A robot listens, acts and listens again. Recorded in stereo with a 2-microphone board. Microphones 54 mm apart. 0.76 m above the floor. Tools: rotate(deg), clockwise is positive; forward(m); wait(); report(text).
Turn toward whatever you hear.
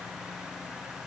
wait()
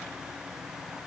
wait()
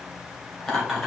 rotate(-30)
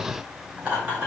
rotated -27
rotate(30)
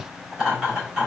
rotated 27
rotate(10)
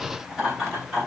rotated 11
report("Found it: laughter, straight ahead.")